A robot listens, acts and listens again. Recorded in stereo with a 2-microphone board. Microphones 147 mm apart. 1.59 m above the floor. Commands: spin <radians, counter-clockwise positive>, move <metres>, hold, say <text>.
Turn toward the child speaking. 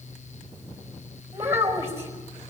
spin -0.26
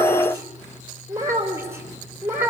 spin -0.26
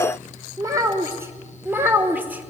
spin -0.52
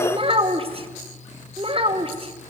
spin -2.44
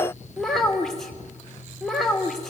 say Facing the child speaking.